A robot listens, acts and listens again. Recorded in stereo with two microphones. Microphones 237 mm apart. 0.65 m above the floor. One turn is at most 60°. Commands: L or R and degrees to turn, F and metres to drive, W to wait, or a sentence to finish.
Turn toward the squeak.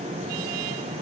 W
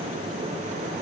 W
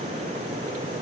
I can't make out a squeak.